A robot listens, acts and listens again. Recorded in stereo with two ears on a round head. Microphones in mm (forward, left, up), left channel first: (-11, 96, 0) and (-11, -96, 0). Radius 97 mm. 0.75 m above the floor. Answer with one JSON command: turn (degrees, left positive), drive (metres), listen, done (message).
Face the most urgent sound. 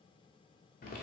{"listen": true}
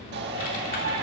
{"turn": -50}
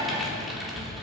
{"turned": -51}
{"listen": true}
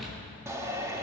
{"turn": -15}
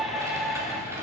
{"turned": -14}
{"done": "Facing the shout, 1 to 2 m away."}